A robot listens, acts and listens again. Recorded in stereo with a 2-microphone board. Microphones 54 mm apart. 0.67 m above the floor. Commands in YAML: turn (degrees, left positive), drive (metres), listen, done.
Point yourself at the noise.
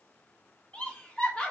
turn: 20
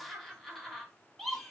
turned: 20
done: "Facing the laughter, 1 to 2 m away."